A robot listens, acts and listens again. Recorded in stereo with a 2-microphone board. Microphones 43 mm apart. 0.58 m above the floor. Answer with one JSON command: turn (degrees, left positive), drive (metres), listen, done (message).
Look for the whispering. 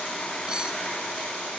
{"listen": true}
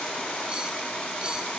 {"listen": true}
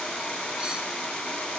{"done": "I can't make out whispering."}